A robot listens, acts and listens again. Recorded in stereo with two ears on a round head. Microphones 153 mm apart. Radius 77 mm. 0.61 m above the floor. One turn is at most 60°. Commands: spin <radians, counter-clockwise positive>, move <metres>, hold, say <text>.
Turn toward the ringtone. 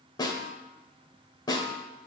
hold
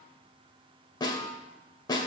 hold
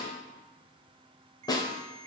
spin -0.61
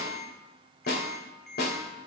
say Found it: a ringtone, straight ahead.